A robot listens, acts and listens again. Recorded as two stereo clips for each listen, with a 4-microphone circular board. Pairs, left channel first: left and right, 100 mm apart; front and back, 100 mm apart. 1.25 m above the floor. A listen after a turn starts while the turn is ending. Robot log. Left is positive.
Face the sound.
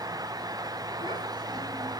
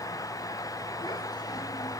note: The child speaking: 50° right.
cmd yaw -50
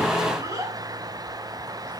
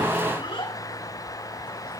note: The child speaking is now 35° right.
cmd yaw -35
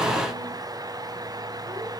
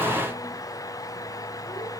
cmd idle
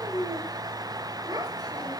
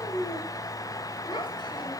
note: The child speaking is now 40° right.
cmd yaw -40
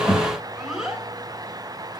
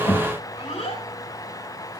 end: Found it: a child speaking, straight ahead, 2 to 4 m away.